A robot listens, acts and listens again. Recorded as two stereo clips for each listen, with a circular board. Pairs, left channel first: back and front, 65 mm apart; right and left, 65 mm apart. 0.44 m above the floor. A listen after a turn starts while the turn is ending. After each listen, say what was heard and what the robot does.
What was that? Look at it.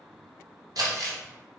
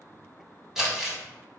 Found it: crumpling, straight ahead, under 1 m away.